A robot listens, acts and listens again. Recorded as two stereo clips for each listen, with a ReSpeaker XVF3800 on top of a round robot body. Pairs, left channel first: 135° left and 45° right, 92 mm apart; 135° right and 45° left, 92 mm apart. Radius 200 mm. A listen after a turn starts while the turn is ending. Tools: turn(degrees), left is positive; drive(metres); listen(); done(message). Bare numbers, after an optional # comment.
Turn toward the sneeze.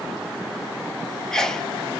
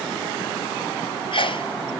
# The sneeze: 140° right.
turn(-140)
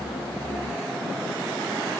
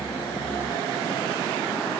done("Facing where the sneeze came from. I can't hear it now.")